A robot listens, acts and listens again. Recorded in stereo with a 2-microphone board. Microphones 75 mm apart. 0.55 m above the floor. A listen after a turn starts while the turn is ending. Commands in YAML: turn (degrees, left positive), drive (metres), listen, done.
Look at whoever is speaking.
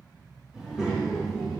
turn: -30
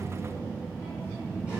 turn: -30
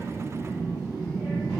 turn: -30
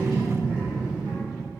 turn: -155
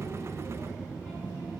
turn: -20
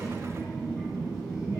done: "Found it: a child speaking, straight ahead."